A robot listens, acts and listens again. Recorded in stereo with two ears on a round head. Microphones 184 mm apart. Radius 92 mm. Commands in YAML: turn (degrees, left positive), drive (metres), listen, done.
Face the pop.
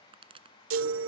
turn: -25
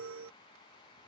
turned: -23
listen: true
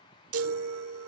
done: "I heard a pop, but can't make it out now. It was about 5° right or 130° right."